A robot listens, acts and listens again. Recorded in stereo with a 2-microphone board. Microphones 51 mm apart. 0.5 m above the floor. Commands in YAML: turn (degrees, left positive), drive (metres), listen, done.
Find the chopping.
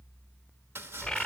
turn: -55
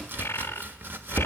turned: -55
turn: -55
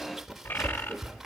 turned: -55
done: "Facing the chopping."